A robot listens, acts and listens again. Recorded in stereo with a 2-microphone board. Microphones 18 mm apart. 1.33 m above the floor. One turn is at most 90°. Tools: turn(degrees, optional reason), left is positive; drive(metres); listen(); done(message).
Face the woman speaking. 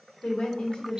turn(degrees=55, reason="The woman speaking: about 55° left or 125° left.")
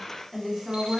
turn(degrees=-20, reason="So it is at 20° right.")
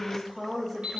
turn(degrees=-10, reason="The woman speaking is now 10° right.")
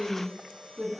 turn(degrees=-20, reason="The woman speaking is now 20° right.")
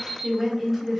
done("Found it: a woman speaking, straight ahead, 2 to 4 m away.")